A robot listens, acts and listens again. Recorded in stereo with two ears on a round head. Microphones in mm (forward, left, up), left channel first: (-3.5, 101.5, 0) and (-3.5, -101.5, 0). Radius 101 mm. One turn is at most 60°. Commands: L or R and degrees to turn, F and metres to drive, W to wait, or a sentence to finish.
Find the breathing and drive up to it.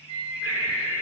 R60
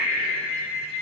R60
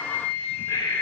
L15
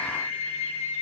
W
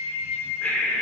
F1.0
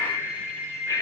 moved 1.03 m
L15
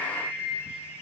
W
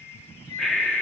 F1.0
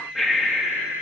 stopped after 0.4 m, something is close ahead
I am next to the breathing.